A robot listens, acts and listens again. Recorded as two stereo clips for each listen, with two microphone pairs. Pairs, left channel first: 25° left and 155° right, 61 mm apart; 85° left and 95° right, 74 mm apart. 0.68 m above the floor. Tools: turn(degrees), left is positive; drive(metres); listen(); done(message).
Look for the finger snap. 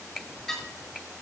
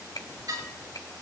turn(degrees=125)
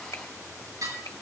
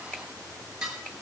turn(degrees=15)
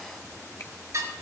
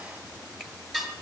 listen()
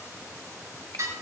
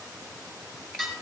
listen()
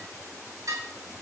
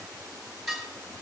done("Facing where the finger snap came from. I can't hear it now.")